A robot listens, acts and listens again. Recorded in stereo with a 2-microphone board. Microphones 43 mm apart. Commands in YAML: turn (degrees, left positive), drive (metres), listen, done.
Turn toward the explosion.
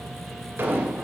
turn: -65
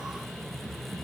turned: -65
listen: true
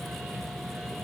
done: "I heard an explosion, but can't make it out now. It was about straight ahead or 50° right."